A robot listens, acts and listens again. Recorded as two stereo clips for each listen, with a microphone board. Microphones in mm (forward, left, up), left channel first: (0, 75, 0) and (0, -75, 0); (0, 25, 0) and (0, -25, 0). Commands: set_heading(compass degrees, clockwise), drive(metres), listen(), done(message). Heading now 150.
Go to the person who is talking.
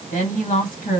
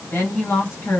set_heading(90)
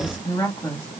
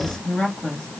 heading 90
set_heading(70)
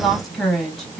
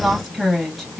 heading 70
drive(1.0)
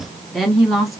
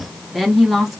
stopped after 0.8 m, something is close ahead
done("Arrived at the woman speaking, straight ahead.")